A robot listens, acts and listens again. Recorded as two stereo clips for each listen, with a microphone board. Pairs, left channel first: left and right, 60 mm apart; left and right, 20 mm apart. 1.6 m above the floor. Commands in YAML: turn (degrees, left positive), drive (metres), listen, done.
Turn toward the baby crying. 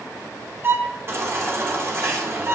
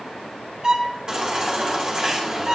turn: -45
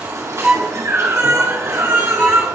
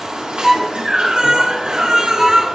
turn: -80
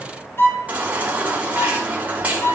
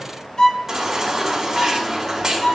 turn: -30
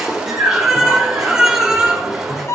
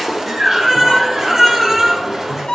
turn: -10
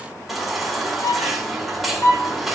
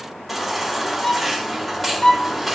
done: "Found it: a baby crying, straight ahead."